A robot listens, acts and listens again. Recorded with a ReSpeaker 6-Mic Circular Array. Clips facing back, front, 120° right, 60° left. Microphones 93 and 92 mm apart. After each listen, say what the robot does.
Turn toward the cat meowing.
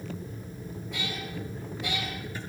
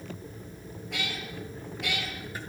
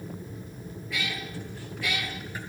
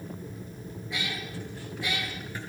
Found it: a cat meowing, straight ahead, over 4 m away.